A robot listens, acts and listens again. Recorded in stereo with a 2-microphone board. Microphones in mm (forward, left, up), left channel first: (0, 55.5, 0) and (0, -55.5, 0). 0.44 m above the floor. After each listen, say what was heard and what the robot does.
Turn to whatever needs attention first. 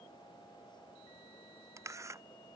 Keep listening.
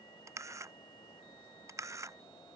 Keep listening.
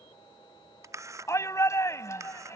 The shout: about 25° left or 155° left. Turn 25° left.
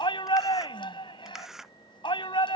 So it is at 130° left. Turn 130° left.
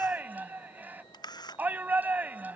The shout is now 15° right. Turn 15° right.
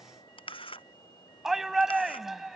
Facing the shout.